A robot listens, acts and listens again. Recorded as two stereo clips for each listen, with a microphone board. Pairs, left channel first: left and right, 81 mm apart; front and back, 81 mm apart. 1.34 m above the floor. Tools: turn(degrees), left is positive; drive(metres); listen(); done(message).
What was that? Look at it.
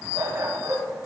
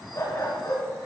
turn(degrees=-50)
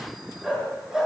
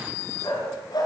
done("Found it: a dog barking, straight ahead.")